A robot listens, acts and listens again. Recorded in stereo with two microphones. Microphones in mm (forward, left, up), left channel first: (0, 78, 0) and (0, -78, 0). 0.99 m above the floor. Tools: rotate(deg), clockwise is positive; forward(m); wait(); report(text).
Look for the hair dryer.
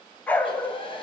rotate(-35)
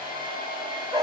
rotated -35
rotate(-110)
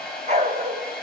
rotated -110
report("Found it: a hair dryer, straight ahead.")